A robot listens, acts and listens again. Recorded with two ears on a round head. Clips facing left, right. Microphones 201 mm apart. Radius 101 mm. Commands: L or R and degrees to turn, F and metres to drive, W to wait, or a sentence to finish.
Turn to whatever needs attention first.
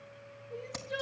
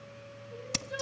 L35
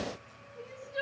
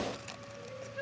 L105
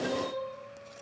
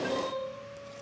Found it: crying, straight ahead, over 4 m away.